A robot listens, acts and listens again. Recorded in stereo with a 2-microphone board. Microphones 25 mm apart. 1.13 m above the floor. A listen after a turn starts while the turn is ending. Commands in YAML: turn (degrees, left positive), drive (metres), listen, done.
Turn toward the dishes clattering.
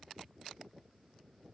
listen: true
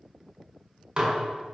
turn: -35
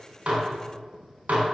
turn: -110
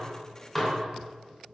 done: "Found it: dishes clattering, straight ahead."